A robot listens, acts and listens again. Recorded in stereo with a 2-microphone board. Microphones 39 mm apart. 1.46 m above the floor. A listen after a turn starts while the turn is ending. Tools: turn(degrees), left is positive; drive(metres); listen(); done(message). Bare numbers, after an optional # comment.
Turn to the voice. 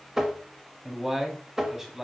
turn(-30)
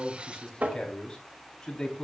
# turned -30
# So it is at 20° left.
turn(20)
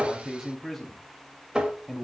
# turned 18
done("Found it: a man speaking, straight ahead.")